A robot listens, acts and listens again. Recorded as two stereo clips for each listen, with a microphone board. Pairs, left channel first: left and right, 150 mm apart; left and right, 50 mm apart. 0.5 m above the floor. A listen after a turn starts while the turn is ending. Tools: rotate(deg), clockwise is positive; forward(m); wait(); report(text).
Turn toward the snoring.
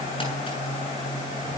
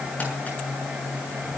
wait()
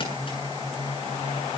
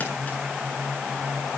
wait()
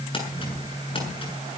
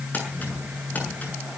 report("I can't make out snoring to turn to.")